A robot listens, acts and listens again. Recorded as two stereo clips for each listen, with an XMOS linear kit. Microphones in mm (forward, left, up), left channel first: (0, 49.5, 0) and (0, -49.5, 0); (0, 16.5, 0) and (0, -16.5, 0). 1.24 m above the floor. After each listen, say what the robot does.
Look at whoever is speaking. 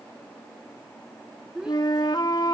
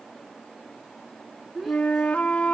Turn 30° right.
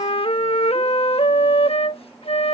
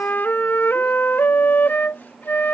Keep listening.
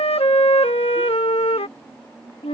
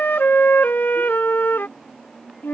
Keep listening.
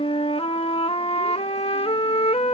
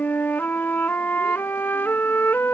I heard a child speaking, but can't make it out now. It was about 20° left or 140° right.